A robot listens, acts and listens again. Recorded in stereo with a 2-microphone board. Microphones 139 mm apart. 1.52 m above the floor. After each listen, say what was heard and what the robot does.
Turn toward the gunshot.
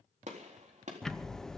The gunshot: about 60° right or 120° right. Turn 60° right.
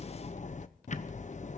Keep listening.
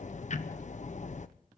I heard a gunshot, but can't make it out now. It was about straight ahead or 60° right.